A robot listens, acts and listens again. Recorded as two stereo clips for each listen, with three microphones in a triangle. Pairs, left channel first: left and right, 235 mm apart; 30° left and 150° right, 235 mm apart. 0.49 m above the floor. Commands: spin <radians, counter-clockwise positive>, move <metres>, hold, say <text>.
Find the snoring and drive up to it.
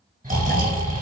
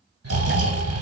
spin -2.53
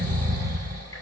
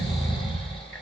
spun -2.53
spin -0.70
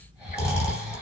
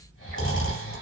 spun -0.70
move 1.0
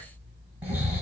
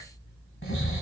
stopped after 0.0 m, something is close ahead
spin -0.17
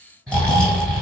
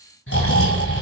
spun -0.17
say Blocked. The snoring is further on, straight ahead.